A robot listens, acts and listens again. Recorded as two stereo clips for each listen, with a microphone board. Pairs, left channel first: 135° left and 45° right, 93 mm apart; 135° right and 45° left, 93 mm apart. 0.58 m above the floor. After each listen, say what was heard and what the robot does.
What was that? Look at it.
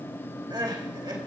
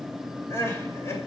The crying: 75° right. Turn 75° right.
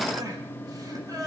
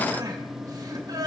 Facing the crying.